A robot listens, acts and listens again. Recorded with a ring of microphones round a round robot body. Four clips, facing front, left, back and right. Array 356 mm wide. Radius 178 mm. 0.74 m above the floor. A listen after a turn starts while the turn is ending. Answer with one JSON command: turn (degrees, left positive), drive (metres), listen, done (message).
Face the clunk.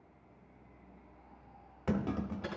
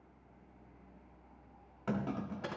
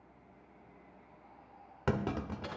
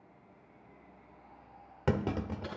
{"turn": -120}
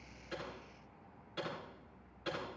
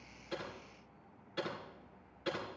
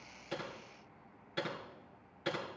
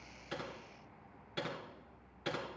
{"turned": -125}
{"done": "Facing where the clunk came from. I can't hear it now."}